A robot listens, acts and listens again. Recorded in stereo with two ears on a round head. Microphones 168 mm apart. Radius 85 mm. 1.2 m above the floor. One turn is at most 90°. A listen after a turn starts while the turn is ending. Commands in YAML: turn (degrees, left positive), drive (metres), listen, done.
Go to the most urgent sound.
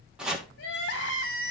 turn: 60
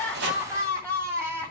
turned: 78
turn: -15
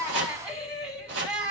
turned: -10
drive: 1.0
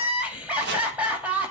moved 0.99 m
drive: 1.0
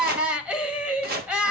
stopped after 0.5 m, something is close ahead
done: "Arrived at the crying, straight ahead."